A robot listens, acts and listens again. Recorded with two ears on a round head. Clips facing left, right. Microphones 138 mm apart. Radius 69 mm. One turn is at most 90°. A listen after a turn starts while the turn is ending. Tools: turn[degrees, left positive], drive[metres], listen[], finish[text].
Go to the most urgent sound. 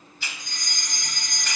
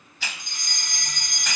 Thought: The fire alarm: about 20° right or 160° right.
Action: turn[-20]
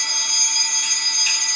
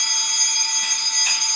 Action: drive[1.0]
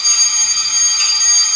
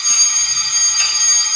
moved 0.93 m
Action: drive[1.0]
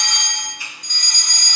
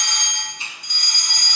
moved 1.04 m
Thought: The fire alarm is now 15° right.
Action: turn[-15]
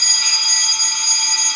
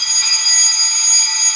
Action: drive[1.0]
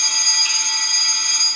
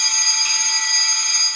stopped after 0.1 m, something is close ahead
Action: finish[I am next to the fire alarm.]